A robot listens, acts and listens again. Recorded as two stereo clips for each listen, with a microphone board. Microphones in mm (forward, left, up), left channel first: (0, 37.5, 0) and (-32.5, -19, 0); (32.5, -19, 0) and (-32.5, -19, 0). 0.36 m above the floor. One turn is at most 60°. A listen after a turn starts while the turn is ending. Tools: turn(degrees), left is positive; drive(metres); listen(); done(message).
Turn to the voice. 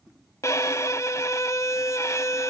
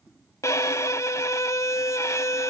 listen()
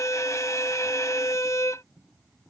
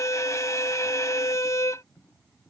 listen()
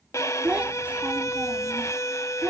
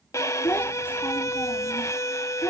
turn(degrees=-55)
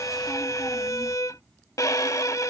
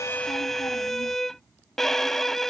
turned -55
listen()
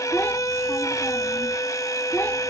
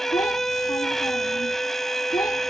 done("Found it: a child speaking, straight ahead.")